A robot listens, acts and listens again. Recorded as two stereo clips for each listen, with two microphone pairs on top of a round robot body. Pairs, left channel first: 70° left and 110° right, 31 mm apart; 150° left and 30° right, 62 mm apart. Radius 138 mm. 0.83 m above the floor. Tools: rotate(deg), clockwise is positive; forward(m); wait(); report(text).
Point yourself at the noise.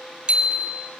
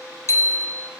rotate(165)
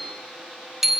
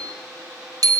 rotate(25)
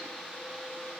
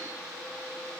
wait()
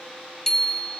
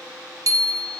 report("Found it: a bicycle bell, straight ahead, 2 to 4 m away.")